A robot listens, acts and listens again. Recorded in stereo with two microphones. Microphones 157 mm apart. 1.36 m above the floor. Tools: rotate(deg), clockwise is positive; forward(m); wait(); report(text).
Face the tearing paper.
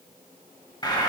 wait()
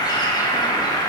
wait()
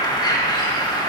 report("I can't make out tearing paper to turn to.")